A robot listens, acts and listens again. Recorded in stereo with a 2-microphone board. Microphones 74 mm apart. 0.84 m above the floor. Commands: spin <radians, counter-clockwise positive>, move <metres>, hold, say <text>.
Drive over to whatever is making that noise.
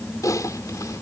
spin 0.87
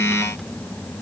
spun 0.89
hold
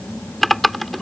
move 1.0
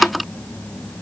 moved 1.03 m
move 1.0
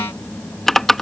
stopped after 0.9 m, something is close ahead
say Arrived at the typing on a keyboard, straight ahead.